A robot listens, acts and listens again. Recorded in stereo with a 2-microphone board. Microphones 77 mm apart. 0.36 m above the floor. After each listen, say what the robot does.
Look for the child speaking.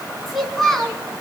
Turn 30° left.
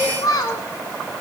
Turn 120° left.
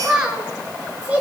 Turn 20° right.
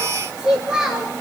Turn 10° right.
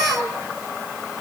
Facing the child speaking.